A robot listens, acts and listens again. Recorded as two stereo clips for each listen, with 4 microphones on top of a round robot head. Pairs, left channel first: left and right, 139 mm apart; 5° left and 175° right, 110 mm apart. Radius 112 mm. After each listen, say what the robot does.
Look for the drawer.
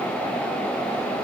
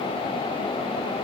Keep listening.
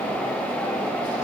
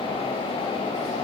Keep listening.
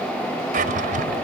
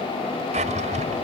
Turn 135° right.
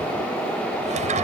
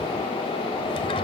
Keep listening.
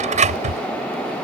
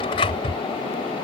Turn 55° right.
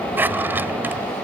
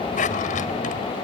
Turn 15° right.
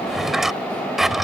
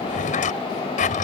Found it: a drawer, straight ahead.